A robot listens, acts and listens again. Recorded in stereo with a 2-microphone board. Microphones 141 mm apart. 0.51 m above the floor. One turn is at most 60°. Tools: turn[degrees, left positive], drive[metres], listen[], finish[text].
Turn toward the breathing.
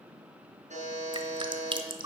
Action: listen[]
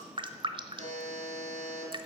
Action: listen[]
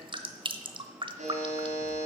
Action: finish[I can't make out breathing, only a buzzer and dripping.]